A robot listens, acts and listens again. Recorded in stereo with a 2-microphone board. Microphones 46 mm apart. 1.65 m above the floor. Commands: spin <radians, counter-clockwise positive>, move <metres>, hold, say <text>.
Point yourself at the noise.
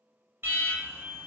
spin -0.96
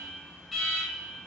say Facing the alarm, 1 to 2 m away.